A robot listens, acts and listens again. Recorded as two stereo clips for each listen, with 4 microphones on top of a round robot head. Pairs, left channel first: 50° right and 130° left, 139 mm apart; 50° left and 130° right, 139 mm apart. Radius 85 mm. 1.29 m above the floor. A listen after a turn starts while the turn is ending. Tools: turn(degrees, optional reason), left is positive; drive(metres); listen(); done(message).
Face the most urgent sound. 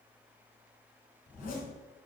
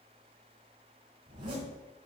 listen()
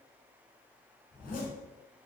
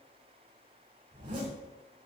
listen()
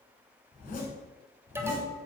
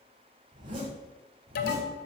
turn(degrees=60, reason="The alarm: 60° left.")
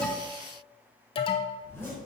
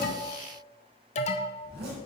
done("Found it: an alarm, straight ahead, 1 to 2 m away.")